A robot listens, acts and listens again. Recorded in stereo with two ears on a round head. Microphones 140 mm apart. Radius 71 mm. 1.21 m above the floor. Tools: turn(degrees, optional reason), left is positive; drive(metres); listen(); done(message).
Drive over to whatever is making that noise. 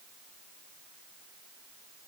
listen()
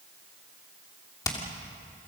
turn(degrees=20, reason="The hammering: about 20° left or 160° left.")
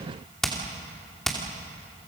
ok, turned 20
drive(metres=1.0)
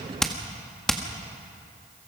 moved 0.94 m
drive(metres=1.0)
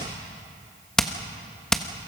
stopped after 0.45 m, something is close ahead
done("I am next to the hammering.")